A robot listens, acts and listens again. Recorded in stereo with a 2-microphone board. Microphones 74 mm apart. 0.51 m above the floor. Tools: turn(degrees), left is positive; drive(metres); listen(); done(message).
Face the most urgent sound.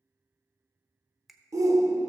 turn(degrees=-55)
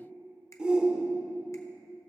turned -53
turn(degrees=-20)
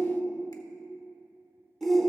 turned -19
done("Facing the shout, 1 to 2 m away.")